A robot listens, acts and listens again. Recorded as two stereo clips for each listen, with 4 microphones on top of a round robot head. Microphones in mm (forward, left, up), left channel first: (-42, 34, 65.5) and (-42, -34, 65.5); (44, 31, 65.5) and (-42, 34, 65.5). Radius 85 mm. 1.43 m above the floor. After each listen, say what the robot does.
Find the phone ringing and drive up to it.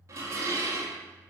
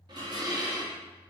Keep listening.
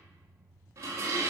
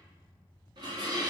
Keep listening.
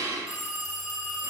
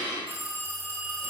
Turn 120° left.
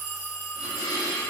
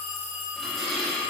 Turn 20° right.
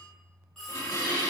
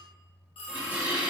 Drive 1.0 m forward.
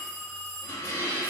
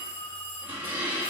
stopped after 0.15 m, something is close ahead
Something is in my way. I am facing the phone ringing but have not reached it.